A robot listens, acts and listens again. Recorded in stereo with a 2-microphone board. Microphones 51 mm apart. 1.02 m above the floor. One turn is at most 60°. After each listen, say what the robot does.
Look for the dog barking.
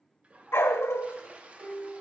Turn 60° left.
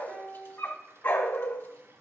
Turn 50° left.
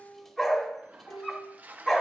Facing the dog barking, under 1 m away.